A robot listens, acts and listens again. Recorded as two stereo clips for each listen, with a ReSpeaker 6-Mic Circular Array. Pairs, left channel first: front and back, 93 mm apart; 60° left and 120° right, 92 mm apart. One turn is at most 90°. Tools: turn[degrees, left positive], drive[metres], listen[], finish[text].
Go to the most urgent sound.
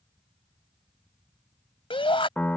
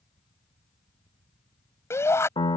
Action: drive[1.0]
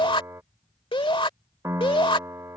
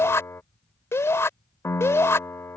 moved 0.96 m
Action: drive[1.0]
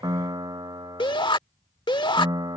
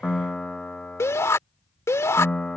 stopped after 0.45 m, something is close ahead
Action: finish[I am next to the shout.]